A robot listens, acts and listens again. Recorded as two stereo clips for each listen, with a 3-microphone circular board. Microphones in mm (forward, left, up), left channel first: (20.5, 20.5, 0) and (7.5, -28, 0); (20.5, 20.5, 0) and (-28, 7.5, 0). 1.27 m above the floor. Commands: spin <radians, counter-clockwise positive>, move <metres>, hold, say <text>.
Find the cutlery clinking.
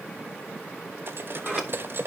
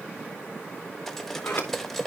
spin -1.22
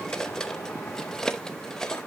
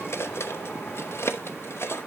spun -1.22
say Found it: cutlery clinking, straight ahead, under 1 m away.